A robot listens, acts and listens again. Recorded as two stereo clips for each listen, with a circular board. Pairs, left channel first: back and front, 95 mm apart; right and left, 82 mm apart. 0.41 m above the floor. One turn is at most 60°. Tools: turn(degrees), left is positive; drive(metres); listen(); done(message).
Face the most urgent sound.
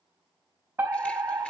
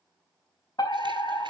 turn(degrees=-60)
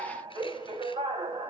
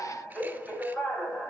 turn(degrees=-10)
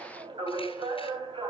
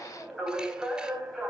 done("Found it: a fire alarm, straight ahead, over 4 m away.")